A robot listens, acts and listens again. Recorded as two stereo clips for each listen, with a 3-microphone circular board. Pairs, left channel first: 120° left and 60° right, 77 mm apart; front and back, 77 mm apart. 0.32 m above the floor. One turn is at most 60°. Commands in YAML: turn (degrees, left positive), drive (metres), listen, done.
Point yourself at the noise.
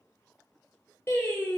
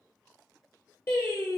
turn: 60
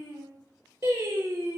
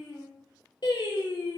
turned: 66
done: "Facing the singing, 1 to 2 m away."